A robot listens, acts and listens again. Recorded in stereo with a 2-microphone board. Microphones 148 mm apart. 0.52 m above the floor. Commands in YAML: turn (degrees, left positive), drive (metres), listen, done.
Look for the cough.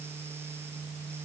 listen: true
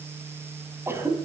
turn: -15
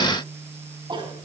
turn: -150
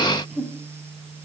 done: "Found it: a cough, straight ahead."